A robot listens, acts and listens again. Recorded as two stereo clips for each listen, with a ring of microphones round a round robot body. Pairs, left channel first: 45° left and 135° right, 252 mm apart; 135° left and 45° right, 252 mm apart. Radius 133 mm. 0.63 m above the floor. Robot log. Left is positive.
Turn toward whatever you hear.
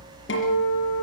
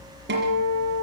end: Found it: a guitar, straight ahead, over 4 m away.